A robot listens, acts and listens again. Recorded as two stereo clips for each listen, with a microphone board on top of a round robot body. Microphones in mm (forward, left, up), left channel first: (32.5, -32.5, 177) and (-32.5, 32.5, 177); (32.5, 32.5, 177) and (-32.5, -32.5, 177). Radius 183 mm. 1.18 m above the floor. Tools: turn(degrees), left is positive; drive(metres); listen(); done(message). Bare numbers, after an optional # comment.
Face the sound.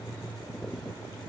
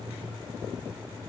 listen()
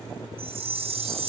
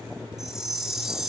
# The chime: 140° left.
turn(140)
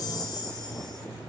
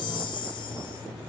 done("Found it: a chime, straight ahead, 2 to 4 m away.")